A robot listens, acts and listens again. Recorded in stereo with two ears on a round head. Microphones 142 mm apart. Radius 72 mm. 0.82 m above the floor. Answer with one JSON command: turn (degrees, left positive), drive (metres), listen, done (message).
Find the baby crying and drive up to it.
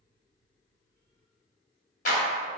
{"listen": true}
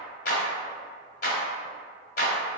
{"listen": true}
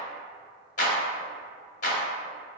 {"done": "I can't make out a baby crying, only a clap."}